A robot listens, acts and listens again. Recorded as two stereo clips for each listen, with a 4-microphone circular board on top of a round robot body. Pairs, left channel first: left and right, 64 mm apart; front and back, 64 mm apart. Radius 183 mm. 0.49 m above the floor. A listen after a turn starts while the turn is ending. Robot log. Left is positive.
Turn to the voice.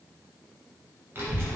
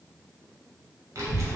note: The child speaking: 145° right.
cmd yaw -145
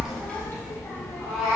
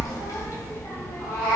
note: The child speaking is now 45° left.
cmd yaw +45
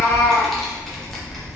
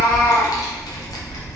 end: Facing the child speaking, under 1 m away.